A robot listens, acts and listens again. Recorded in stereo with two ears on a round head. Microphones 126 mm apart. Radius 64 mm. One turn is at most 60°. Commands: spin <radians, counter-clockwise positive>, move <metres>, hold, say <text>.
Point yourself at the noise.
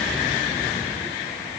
hold
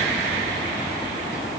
hold
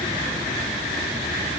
say I can't make out anything.